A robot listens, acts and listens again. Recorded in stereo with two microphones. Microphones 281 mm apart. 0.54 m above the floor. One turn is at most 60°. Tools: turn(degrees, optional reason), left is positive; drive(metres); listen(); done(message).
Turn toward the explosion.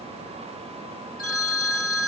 listen()
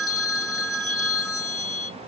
listen()
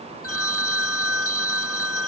done("I can't make out an explosion to turn to.")